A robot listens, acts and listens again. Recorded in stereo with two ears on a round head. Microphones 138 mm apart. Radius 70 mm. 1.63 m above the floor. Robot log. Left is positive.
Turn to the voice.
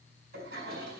cmd idle
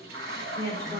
cmd yaw +30
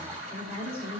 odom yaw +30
note: So it is at 15° right.
cmd yaw -15
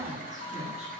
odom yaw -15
cmd idle
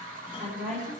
end: Facing the woman speaking, over 4 m away.